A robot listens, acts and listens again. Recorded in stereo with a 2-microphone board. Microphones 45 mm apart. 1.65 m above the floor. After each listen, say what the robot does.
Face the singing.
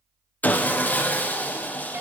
Keep listening.
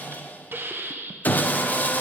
Keep listening.
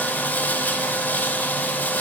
I can't make out singing to turn to.